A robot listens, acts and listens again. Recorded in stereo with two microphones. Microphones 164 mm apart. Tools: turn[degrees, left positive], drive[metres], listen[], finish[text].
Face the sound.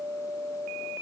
Action: listen[]
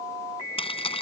Thought: The keys jangling: about 35° left or 145° left.
Action: turn[35]
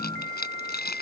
Thought: So it is at 105° left.
Action: turn[105]
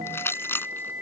Thought: The keys jangling is now 15° left.
Action: turn[15]
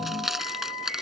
Action: finish[Facing the keys jangling.]